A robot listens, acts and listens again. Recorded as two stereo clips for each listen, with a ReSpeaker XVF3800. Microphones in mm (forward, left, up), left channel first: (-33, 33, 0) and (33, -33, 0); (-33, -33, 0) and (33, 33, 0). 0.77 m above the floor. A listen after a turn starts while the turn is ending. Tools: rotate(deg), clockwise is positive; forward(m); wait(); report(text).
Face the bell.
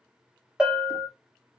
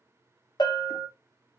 rotate(125)
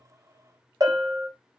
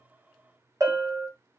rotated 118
report("Found it: a bell, straight ahead.")